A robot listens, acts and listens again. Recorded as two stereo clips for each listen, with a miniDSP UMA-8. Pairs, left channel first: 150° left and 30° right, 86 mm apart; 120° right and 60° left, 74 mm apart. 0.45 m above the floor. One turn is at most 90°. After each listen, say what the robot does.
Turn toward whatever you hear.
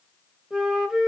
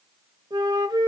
Turn 50° left.
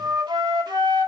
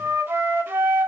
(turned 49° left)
Facing the flute.